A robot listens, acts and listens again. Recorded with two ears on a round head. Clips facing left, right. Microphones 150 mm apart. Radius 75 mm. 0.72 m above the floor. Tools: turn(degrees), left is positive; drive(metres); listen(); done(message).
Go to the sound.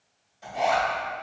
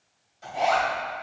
turn(degrees=30)
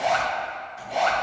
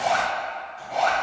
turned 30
turn(degrees=150)
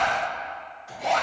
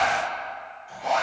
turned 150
turn(degrees=65)
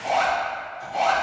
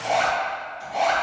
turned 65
drive(metres=1.0)
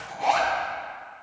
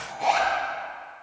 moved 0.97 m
drive(metres=1.0)
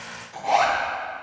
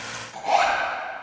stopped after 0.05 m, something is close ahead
done("Arrived at the zipper, straight ahead.")